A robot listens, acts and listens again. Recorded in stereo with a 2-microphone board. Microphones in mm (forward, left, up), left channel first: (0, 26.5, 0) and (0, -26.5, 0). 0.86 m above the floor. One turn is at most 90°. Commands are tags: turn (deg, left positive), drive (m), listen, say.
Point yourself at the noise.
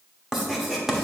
<turn deg="-30"/>
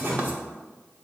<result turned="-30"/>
<turn deg="-90"/>
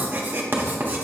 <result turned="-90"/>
<turn deg="-40"/>
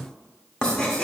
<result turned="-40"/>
<turn deg="15"/>
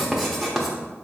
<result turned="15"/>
<say>Facing the writing, 1 to 2 m away.</say>